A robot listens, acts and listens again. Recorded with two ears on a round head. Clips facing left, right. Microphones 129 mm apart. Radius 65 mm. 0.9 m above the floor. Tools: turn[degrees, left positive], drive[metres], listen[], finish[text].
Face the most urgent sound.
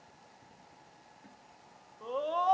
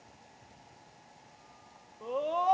Action: turn[-30]
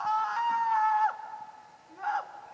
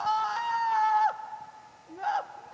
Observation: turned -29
Thought: So it is at 140° right.
Action: turn[-140]
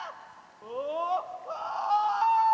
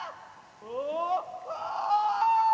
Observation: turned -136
Action: finish[Facing the scream.]